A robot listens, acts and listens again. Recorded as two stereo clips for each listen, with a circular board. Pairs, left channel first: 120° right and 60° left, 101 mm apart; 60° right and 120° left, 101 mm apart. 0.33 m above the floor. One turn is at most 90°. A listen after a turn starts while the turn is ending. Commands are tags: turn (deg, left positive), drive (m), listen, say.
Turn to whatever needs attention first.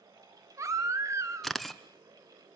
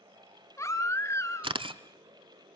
<say>Facing the baby crying, 1 to 2 m away.</say>